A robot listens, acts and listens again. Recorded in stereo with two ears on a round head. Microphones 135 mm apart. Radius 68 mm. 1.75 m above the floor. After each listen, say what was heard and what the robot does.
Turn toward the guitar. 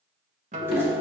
The guitar: about 50° right or 130° right. Turn 50° right.
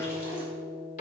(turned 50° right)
Found it: a guitar, straight ahead, 1 to 2 m away.